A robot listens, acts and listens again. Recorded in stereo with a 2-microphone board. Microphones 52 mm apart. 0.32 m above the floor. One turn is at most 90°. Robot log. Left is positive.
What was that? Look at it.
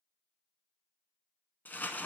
note: The crumpling: about 40° left or 140° left.
cmd yaw +40
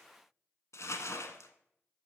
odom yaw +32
note: So it is at 110° left.
cmd yaw +90
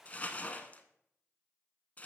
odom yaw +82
note: The crumpling is now 25° left.
cmd yaw +25
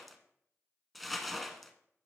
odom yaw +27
end: Facing the crumpling, under 1 m away.